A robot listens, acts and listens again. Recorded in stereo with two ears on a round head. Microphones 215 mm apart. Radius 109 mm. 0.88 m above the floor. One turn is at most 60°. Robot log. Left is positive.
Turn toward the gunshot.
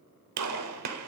note: The gunshot: about 70° right or 110° right.
cmd yaw -60
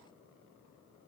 cmd idle
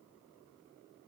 end: I heard a gunshot, but can't make it out now. It was about 10° right or 50° right.